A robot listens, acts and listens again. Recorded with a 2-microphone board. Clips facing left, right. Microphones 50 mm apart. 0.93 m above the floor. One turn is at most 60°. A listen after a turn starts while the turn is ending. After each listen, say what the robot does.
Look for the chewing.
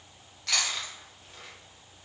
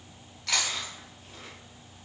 Turn 30° left.
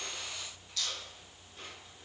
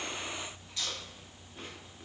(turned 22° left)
Turn 25° right.
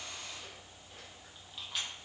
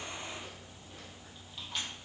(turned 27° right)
Found it: chewing, straight ahead.